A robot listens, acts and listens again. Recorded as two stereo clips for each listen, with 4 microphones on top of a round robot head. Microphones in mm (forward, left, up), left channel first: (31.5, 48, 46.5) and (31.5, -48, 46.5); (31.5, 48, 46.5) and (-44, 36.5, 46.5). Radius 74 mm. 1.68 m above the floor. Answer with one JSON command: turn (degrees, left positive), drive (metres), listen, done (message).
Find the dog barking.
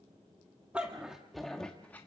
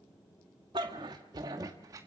{"turn": 165}
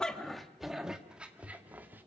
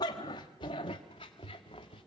{"turn": -20}
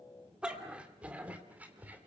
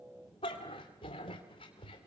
{"turn": -20}
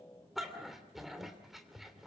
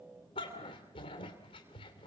{"done": "Facing the dog barking."}